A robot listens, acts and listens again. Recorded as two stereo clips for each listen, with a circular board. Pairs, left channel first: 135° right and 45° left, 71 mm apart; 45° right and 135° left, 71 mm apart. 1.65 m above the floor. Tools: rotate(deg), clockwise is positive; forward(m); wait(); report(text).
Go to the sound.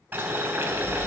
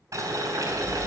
rotate(-100)
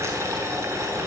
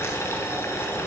forward(1.0)
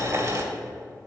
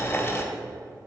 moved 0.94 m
forward(1.0)
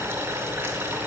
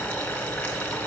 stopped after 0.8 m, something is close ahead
report("Arrived at the boiling, straight ahead.")